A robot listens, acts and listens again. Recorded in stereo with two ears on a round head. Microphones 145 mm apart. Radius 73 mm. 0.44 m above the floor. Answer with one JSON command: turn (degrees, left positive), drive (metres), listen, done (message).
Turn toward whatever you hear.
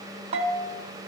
{"turn": -40}
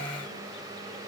{"listen": true}
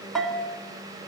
{"done": "Facing the bell."}